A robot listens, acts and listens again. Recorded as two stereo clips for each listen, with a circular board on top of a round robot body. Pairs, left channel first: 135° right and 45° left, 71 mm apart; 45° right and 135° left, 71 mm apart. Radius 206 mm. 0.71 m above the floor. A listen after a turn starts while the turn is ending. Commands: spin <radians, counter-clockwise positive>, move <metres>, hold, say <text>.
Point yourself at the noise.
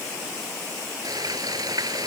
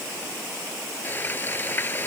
spin 0.26
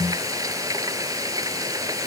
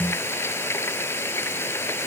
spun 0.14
spin 0.17
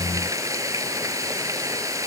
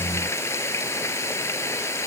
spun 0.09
say Facing the frying.